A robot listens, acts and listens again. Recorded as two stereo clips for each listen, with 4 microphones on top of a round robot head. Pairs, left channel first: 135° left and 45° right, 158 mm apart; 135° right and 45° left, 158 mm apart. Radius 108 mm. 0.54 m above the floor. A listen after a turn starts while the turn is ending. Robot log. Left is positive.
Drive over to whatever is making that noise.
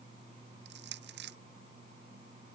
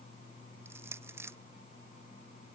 note: The crushing: 30° right.
cmd yaw -30
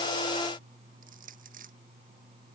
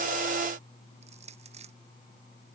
cmd fwd 1.0
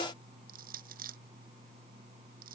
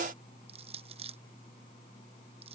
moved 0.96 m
note: The crushing is now 10° right.
cmd yaw -10
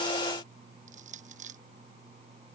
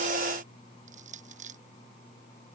cmd fwd 1.0
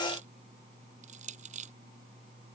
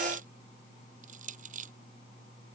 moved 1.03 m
cmd fwd 1.0
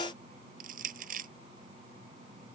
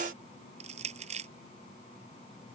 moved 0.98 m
cmd fwd 1.0
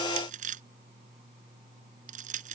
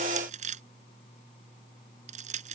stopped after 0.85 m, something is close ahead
end: I am next to the crushing.